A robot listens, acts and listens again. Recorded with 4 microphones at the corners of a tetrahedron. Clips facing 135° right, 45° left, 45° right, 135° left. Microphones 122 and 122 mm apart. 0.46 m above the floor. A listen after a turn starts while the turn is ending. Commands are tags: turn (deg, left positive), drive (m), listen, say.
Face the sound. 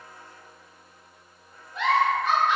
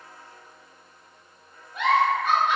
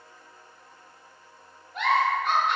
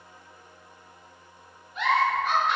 <turn deg="-30"/>
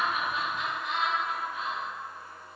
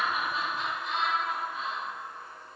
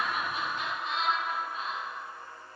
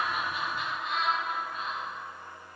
<turn deg="10"/>
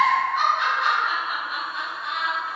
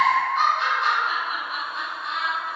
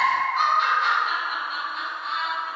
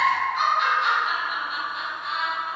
<say>Found it: a giggle, straight ahead, 1 to 2 m away.</say>